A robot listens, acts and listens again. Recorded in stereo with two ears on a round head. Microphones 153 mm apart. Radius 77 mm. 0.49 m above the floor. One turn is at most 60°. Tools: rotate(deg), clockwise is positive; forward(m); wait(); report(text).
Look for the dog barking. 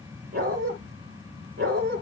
rotate(55)
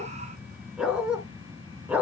rotate(10)
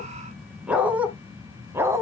rotate(15)
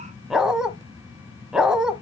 report("Found it: a dog barking, straight ahead.")